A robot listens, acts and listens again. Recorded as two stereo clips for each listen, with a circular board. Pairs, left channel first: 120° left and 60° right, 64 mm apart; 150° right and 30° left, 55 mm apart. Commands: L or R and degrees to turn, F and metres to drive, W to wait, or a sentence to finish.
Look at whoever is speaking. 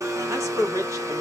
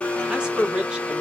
R40
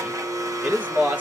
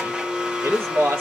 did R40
Facing the man speaking.